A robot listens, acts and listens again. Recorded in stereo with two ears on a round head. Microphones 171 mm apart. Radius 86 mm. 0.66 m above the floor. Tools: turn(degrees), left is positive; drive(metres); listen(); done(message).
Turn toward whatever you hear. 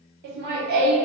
turn(degrees=-50)
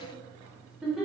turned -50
done("Found it: laughter, straight ahead.")